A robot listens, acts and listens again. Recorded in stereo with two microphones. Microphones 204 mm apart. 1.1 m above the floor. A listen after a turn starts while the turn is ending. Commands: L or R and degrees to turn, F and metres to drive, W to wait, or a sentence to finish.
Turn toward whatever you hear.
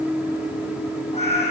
L35
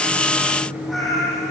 Facing the cat meowing.